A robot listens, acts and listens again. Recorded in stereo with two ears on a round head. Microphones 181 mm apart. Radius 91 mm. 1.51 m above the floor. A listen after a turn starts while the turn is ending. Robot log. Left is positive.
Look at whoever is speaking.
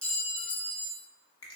cmd idle
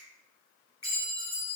cmd idle
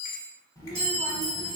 note: The child speaking: about 15° left or 165° left.
cmd yaw +15
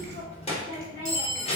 note: So it is at 150° left.
cmd yaw +150
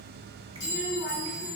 note: The child speaking is now 10° right.
cmd yaw -10
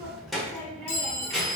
end: Facing the child speaking.